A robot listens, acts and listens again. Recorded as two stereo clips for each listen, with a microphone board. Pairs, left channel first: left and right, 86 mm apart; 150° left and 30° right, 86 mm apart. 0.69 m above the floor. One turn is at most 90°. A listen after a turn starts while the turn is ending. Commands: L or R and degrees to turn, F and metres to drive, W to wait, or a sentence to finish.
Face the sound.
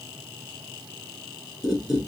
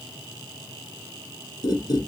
L90
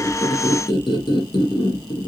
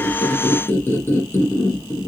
L90
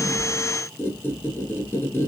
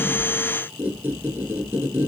L30
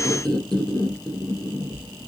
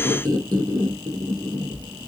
L10
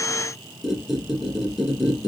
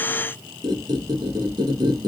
Found it: a squeak, straight ahead, 1 to 2 m away.